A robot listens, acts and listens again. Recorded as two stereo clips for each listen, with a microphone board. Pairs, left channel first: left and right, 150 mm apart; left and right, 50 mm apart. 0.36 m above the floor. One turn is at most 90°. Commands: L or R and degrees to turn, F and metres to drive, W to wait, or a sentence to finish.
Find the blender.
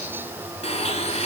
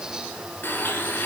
L45
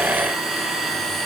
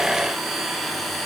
Found it: a blender, straight ahead.